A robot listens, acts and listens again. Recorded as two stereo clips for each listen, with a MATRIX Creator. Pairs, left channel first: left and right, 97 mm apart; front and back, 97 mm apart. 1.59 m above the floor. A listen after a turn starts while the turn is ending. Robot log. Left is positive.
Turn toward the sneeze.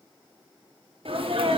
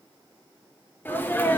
note: The sneeze: 70° right.
cmd yaw -70
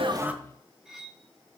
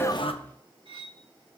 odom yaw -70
end: Facing where the sneeze came from. I can't hear it now.